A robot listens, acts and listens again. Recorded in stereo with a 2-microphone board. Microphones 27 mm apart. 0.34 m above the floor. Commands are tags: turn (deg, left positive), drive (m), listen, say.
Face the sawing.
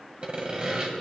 <turn deg="-40"/>
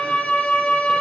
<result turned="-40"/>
<listen/>
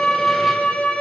<listen/>
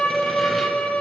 <say>I heard sawing, but can't make it out now. It was about straight ahead or 100° right.</say>